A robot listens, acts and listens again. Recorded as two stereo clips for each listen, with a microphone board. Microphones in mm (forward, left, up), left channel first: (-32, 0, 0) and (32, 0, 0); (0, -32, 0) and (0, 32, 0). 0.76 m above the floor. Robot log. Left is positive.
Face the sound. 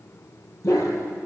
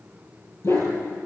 note: The dog barking: 140° right.
cmd yaw -140
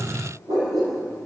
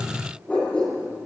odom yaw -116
note: The dog barking is now 20° right.
cmd yaw -20
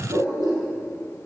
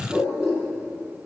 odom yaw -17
end: Facing the dog barking.